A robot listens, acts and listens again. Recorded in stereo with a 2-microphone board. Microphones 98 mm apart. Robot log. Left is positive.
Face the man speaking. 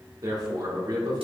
note: The man speaking: about 45° right or 135° right.
cmd yaw -45
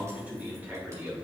note: So it is at 20° right.
cmd yaw -20
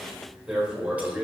note: The man speaking is now 10° right.
cmd yaw -10
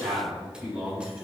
note: The man speaking is now 10° right.
cmd yaw -10
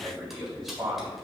end: Found it: a man speaking, straight ahead, over 4 m away.